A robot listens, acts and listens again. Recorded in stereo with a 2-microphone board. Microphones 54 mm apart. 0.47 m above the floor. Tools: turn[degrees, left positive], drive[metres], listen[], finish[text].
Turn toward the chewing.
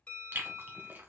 Thought: The chewing: about 40° right or 140° right.
Action: turn[-40]
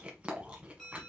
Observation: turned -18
Thought: So it is at 20° right.
Action: turn[-20]
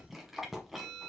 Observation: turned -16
Action: finish[Facing the chewing.]